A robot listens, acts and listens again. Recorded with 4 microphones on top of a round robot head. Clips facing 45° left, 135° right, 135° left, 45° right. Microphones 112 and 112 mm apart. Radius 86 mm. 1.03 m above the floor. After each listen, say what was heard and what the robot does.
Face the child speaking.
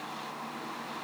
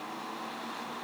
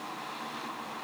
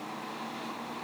Keep listening.
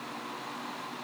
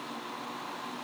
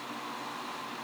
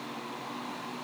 Keep listening.
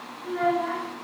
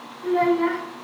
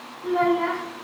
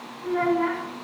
The child speaking: 155° right. Turn 155° right.
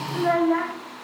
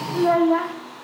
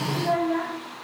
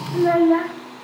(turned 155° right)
The child speaking is now 70° right. Turn 70° right.
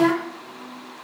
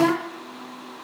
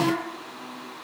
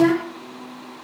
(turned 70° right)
The child speaking is now 50° right. Turn 50° right.
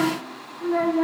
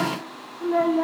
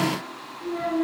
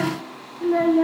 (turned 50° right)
The child speaking is now 55° right. Turn 55° right.
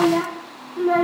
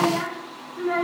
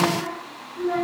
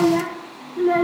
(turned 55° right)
The child speaking is now 10° right. Turn 10° right.
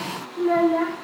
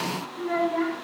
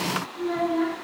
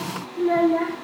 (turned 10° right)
Found it: a child speaking, straight ahead, 1 to 2 m away.